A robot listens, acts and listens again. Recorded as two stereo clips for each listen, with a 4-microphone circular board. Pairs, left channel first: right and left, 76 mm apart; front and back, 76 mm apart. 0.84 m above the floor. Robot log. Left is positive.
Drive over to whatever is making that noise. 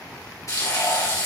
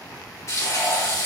note: The frying: 50° right.
cmd yaw -50
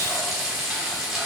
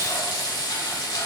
note: The frying is now 10° left.
cmd yaw +10
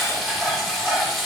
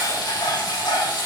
cmd fwd 1.0
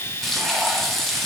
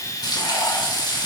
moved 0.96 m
cmd fwd 1.0
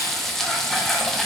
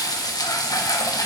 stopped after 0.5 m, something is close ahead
end: I am next to the frying.